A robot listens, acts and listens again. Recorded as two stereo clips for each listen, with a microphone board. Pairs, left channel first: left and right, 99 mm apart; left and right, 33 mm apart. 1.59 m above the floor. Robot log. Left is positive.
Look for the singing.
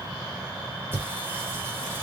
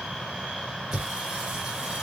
note: The singing: about 25° right or 155° right.
cmd yaw -25
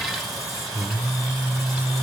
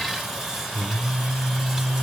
end: Found it: singing, straight ahead.